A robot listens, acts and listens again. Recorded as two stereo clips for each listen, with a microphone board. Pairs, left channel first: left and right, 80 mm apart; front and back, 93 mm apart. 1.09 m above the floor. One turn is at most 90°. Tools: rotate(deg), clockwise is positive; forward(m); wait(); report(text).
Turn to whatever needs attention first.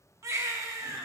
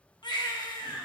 rotate(40)
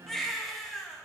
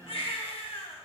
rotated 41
report("Found it: a baby crying, straight ahead, 1 to 2 m away.")